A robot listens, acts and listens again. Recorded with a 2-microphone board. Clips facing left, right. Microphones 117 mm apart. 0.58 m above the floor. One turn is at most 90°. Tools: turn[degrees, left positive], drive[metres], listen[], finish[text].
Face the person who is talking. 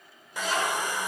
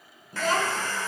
Thought: The child speaking: about 50° right or 130° right.
Action: turn[-50]
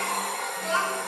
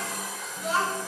Action: finish[Found it: a child speaking, straight ahead, over 4 m away.]